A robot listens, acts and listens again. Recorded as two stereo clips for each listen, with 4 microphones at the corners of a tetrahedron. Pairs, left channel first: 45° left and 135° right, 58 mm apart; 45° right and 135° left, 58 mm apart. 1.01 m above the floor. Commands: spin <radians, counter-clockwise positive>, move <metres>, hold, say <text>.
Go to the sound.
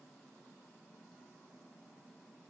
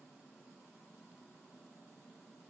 hold
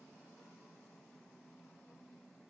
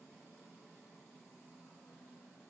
hold
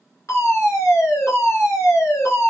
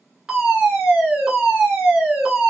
spin 1.05
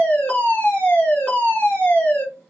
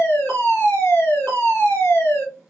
move 1.0
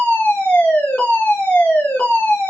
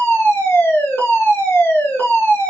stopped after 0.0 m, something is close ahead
say Something is in my way. I am facing the fire alarm but have not reached it.